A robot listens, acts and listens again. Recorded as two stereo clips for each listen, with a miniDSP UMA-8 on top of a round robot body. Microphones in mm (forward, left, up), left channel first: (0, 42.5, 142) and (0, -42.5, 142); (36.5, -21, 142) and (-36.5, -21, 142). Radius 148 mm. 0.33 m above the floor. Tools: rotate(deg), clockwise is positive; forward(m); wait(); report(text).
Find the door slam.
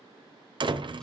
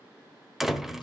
rotate(95)
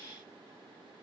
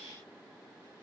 report("I heard a door slam from this way, but can't make it out now.")